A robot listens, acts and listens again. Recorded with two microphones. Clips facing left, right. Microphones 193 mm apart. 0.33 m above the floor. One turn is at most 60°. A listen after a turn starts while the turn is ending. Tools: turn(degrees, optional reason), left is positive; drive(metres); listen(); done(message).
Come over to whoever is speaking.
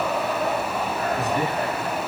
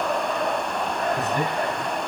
turn(degrees=-55, reason="The man speaking: about 55° right or 125° right.")
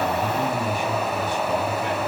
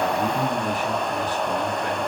turn(degrees=-60, reason="So it is at 60° right.")
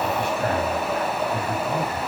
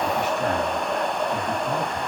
turn(degrees=-15, reason="The man speaking is now 15° right.")
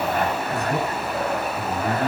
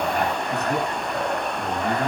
drive(metres=1.0)
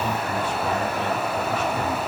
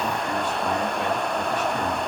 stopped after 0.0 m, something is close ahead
listen()
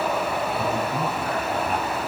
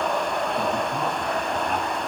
listen()
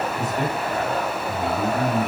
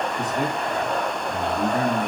done("Something is in my way. I am facing the man speaking but have not reached it.")